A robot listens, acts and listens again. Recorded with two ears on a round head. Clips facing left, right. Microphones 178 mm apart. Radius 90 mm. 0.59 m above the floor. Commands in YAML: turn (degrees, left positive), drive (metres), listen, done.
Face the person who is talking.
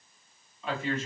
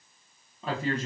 turn: -30
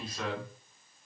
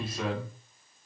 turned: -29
turn: -10
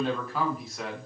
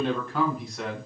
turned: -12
done: "Facing the man speaking, 1 to 2 m away."